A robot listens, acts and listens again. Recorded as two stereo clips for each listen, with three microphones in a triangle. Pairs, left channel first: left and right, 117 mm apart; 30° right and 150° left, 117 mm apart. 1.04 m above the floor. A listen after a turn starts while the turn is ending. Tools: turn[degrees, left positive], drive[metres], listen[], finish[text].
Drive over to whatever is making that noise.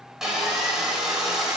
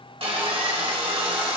Thought: The sawing: 175° right.
Action: turn[-175]
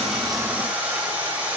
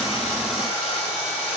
Thought: The sawing is now 15° right.
Action: turn[-15]
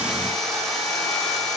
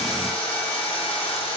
Action: drive[1.0]
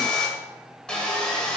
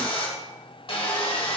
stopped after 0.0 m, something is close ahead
Thought: The sawing is now 10° left.
Action: turn[10]
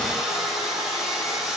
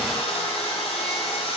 Action: finish[Something is in my way. I am facing the sawing but have not reached it.]